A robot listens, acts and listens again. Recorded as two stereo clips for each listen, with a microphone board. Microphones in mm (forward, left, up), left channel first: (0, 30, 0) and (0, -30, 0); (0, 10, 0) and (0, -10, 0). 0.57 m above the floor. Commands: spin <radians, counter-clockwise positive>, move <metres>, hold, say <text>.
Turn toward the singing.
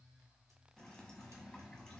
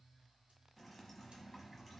hold
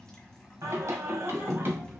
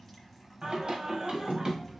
spin -0.61
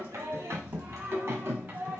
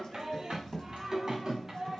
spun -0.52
spin -0.61
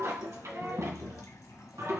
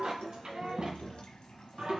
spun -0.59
spin -2.09
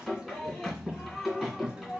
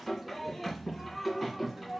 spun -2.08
say Facing the singing.